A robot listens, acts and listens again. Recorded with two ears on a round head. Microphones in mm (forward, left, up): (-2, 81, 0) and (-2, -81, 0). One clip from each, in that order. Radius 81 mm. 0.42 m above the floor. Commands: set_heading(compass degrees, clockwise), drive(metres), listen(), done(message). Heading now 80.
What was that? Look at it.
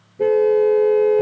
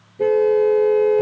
set_heading(110)
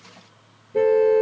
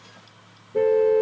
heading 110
set_heading(90)
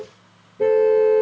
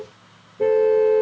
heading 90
done("Facing the car horn.")